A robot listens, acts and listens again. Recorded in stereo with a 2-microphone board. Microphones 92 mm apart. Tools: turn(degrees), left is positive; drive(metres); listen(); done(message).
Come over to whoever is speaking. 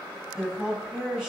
turn(degrees=-30)
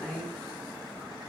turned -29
turn(degrees=20)
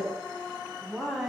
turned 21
drive(metres=1.0)
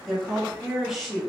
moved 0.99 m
drive(metres=1.0)
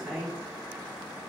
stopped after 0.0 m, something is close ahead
done("Arrived at the woman speaking, straight ahead.")